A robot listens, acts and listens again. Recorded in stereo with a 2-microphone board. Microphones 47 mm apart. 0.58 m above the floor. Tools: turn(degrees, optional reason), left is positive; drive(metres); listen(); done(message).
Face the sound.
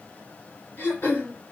turn(degrees=50, reason="The throat clearing: about 50° left or 130° left.")
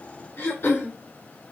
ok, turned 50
turn(degrees=75, reason="So it is at 75° left.")
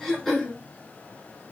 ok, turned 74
done("Facing the throat clearing.")